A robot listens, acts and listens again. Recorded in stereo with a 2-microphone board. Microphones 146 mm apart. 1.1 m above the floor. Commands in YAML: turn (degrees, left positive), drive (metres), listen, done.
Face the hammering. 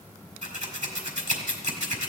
listen: true
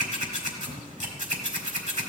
listen: true
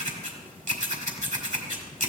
done: "I can't make out hammering to turn to."